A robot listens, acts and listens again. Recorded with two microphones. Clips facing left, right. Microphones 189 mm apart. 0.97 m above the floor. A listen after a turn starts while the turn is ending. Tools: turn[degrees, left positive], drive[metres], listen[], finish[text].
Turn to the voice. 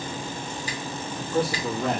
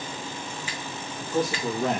Thought: The man speaking: about 45° right or 135° right.
Action: turn[-45]
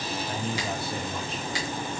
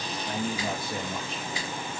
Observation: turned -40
Thought: The man speaking: about 40° right or 140° right.
Action: turn[-40]
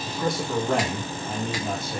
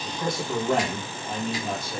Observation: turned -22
Action: finish[Facing the man speaking, 1 to 2 m away.]